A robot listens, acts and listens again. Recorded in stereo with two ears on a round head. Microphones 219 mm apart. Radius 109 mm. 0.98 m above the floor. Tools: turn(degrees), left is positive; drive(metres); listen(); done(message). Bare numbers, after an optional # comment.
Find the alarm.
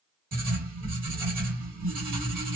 listen()
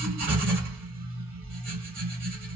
listen()
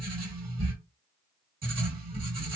done("I can't make out an alarm, only writing.")